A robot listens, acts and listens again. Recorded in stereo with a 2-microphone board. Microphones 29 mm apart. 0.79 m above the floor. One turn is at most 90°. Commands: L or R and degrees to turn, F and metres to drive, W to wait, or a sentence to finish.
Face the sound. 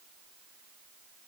W
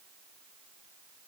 W
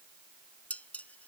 L55
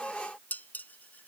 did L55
L70
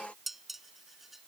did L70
R10
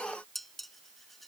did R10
Found it: dishes clattering, straight ahead.